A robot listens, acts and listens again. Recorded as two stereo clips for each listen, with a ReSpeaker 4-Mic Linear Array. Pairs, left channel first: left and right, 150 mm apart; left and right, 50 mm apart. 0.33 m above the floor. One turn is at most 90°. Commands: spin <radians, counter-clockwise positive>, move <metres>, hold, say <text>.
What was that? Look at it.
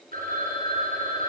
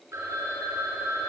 spin -1.22
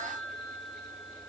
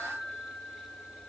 say Found it: a phone ringing, straight ahead.